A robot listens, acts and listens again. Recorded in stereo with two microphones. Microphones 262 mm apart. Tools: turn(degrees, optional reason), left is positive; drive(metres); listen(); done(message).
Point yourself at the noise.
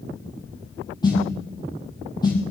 turn(degrees=15, reason="The snare drum: about 15° left or 165° left.")
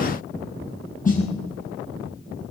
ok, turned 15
turn(degrees=150, reason="So it is at 150° left.")
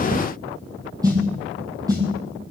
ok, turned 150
turn(degrees=-15, reason="The snare drum is now 15° right.")
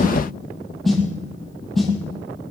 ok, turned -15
done("Found it: a snare drum, straight ahead.")